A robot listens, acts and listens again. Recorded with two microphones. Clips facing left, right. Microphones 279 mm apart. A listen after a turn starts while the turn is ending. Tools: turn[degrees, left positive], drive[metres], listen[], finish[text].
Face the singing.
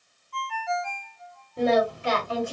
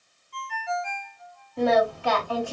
Thought: The singing: about 20° left or 160° left.
Action: turn[20]
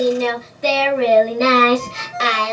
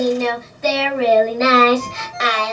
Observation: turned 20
Thought: The singing: about 35° left or 145° left.
Action: turn[35]
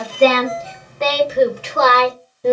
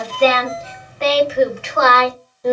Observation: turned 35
Thought: The singing: about 30° left or 150° left.
Action: turn[30]
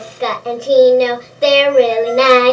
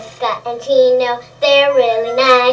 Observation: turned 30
Thought: The singing: about 30° left or 150° left.
Action: turn[30]
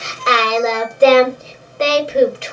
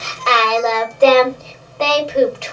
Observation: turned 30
Thought: The singing: about 20° left or 160° left.
Action: turn[20]
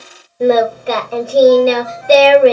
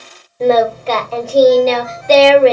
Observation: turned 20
Action: turn[30]
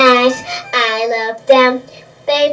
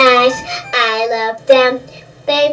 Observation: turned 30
Action: finish[Facing the singing, 1 to 2 m away.]